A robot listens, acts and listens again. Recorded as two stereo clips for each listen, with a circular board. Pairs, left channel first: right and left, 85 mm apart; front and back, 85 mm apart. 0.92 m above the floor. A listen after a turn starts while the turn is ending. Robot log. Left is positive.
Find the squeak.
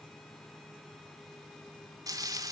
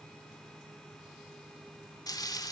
cmd idle
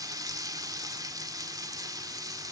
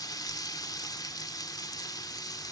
cmd idle
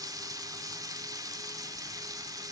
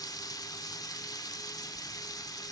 end: I can't make out a squeak, only frying.